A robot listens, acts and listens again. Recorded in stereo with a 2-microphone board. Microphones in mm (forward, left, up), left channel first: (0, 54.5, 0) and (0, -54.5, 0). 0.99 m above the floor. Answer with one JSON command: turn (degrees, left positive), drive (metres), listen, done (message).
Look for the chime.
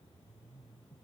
{"listen": true}
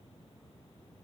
{"listen": true}
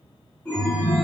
{"turn": 30}
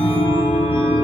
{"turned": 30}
{"turn": -20}
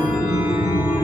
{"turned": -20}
{"done": "Found it: a chime, straight ahead."}